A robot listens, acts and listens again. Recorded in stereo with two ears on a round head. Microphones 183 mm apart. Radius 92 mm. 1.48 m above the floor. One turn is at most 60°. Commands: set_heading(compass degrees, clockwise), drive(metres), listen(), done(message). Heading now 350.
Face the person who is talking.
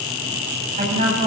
set_heading(30)
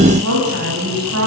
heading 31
set_heading(91)
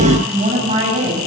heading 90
set_heading(120)
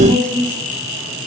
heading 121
done("Found it: a woman speaking, straight ahead, over 4 m away.")